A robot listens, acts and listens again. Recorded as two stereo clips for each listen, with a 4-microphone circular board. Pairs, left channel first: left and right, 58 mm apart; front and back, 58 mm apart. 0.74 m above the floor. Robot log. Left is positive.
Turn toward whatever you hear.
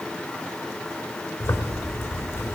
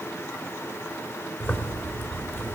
note: The zipper: 50° left.
cmd yaw +50
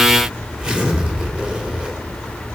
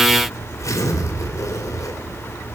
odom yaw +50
note: The zipper is now 15° right.
cmd yaw -15
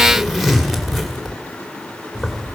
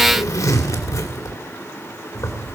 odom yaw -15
end: Facing the zipper.